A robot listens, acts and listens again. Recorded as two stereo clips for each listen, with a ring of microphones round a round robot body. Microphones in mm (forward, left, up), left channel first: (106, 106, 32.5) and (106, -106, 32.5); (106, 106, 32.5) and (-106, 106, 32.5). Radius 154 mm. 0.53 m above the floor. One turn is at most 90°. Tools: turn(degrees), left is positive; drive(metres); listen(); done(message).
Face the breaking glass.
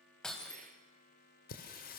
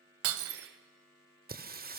turn(degrees=90)
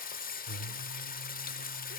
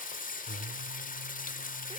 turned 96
turn(degrees=80)
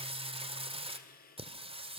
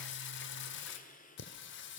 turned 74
turn(degrees=10)
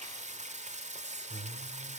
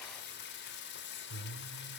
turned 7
done("I heard breaking glass from this way, but can't make it out now.")